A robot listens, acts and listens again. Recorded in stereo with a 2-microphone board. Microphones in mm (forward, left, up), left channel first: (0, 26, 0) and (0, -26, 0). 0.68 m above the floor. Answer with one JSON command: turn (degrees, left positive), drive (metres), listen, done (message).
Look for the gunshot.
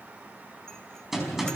{"turn": -30}
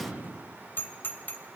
{"turn": -145}
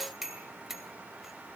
{"done": "Facing where the gunshot came from. I can't hear it now."}